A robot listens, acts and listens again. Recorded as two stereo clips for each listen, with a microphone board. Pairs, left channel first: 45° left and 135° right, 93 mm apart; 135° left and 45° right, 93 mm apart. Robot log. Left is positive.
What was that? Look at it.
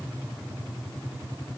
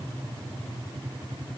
cmd idle
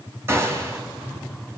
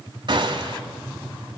note: The gunshot: 75° right.
cmd yaw -75
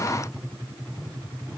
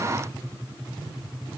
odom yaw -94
note: Nothing new. It was at 20° left.
cmd yaw +20
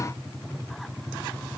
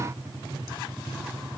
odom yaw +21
end: Facing where the gunshot came from. I can't hear it now.